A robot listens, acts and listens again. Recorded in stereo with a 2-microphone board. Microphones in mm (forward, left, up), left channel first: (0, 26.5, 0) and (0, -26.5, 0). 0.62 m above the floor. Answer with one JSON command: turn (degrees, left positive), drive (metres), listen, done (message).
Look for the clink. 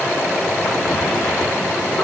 {"listen": true}
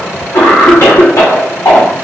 {"listen": true}
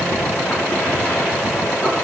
{"done": "I can't make out a clink, only a cough."}